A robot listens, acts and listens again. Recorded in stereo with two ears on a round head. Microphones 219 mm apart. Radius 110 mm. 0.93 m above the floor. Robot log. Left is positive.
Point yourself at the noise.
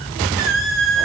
note: The squeak: about 55° right or 125° right.
cmd yaw -55
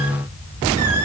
cmd idle
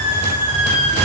note: So it is at 65° right.
cmd yaw -65
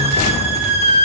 note: The squeak is now 25° right.
cmd yaw -25
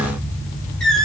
end: Facing the squeak, over 4 m away.